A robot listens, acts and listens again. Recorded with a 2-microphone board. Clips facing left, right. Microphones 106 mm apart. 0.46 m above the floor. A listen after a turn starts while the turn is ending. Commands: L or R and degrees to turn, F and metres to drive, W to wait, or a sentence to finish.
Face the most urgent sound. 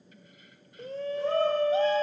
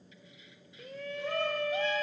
L35
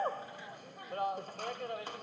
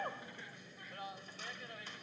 L110
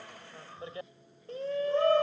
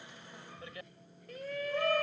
L35
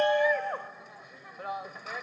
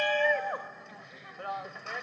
Facing the shout.